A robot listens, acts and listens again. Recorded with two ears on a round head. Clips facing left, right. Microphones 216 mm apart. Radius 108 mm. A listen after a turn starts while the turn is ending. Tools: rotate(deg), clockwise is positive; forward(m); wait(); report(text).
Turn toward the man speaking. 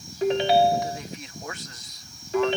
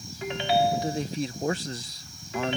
rotate(30)
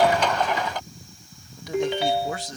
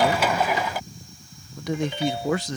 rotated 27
rotate(120)
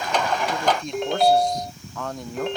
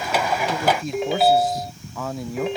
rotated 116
report("Facing the man speaking.")